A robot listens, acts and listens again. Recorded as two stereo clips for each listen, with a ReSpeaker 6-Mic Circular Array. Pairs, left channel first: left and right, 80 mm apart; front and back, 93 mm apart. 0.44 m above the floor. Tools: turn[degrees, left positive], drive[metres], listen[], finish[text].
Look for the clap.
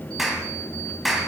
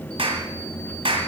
Thought: The clap: straight behind.
Action: turn[180]
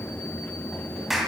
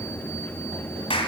Action: finish[Facing the clap, 2 to 4 m away.]